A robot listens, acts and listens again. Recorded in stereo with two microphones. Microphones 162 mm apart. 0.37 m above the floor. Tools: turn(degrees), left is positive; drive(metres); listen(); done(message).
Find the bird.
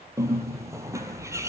turn(degrees=-20)
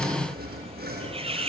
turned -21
turn(degrees=-145)
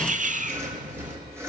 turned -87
turn(degrees=-55)
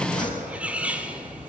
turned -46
turn(degrees=-10)
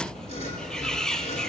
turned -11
done("Found it: a bird, straight ahead, 1 to 2 m away.")